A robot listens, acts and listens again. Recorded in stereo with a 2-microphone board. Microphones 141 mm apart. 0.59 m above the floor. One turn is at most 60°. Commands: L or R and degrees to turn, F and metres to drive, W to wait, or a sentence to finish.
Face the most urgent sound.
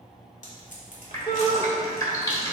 L35
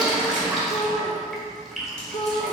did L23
L60
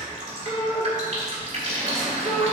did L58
L55
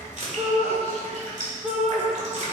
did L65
Facing the shout.